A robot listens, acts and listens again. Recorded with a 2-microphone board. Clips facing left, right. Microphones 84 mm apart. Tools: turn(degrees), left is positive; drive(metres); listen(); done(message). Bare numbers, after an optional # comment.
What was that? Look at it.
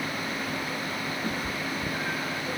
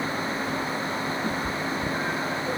# The cat meowing: about 15° right or 165° right.
turn(-15)
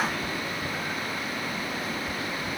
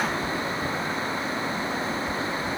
turn(-30)
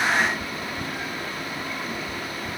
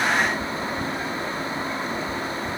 # So it is at 15° left.
turn(15)
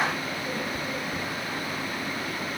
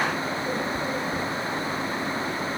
listen()
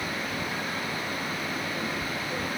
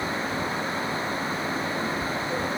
done("Facing the cat meowing.")